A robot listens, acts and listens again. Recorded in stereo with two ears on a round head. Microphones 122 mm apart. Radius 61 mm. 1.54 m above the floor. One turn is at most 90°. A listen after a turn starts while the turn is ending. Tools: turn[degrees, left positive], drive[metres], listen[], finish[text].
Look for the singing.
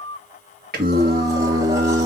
Thought: The singing: about 60° right or 120° right.
Action: turn[-60]
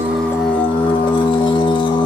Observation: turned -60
Thought: So it is at 25° left.
Action: turn[25]
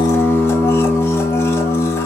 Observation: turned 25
Thought: The singing is now 30° left.
Action: turn[30]
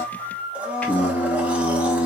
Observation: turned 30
Thought: The singing is now 10° left.
Action: turn[10]
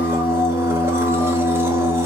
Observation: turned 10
Action: finish[Facing the singing.]